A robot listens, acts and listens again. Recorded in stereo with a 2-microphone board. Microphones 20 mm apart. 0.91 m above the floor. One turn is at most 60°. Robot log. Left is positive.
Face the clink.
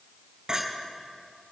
note: The clink: about 45° right or 135° right.
cmd yaw -45
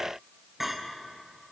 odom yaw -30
note: So it is at 15° right.
cmd yaw -15
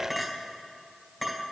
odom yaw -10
end: Found it: a clink, straight ahead, 2 to 4 m away.